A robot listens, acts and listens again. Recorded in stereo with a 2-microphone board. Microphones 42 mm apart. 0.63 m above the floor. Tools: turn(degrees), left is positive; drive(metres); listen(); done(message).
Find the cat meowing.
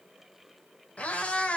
turn(degrees=30)
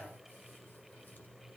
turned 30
listen()
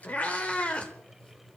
turn(degrees=30)
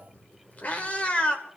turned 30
turn(degrees=25)
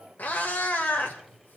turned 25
turn(degrees=40)
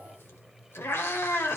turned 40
turn(degrees=105)
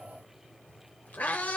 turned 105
turn(degrees=40)
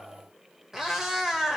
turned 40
turn(degrees=-10)
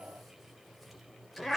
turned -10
done("Found it: a cat meowing, straight ahead.")